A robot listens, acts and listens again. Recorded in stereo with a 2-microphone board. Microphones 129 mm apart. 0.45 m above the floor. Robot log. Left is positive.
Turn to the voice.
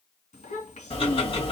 note: The child speaking: about 75° left or 105° left.
cmd yaw +75
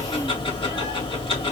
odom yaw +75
cmd idle
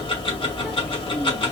cmd idle
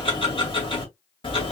end: I heard a child speaking, but can't make it out now. It was about straight ahead or 30° left.